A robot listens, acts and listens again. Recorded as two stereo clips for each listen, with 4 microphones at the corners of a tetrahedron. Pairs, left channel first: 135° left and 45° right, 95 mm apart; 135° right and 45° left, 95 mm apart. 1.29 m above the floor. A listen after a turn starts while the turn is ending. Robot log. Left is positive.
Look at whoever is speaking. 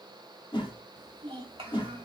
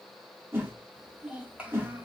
note: The child speaking: 30° right.
cmd yaw -30
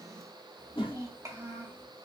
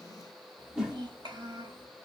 note: The child speaking is now 15° left.
cmd yaw +15
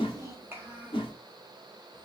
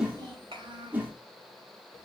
note: The child speaking is now 25° left.
cmd yaw +25
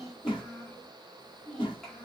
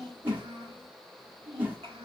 note: The child speaking is now 50° left.
cmd yaw +50
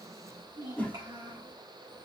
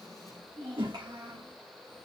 end: Facing the child speaking.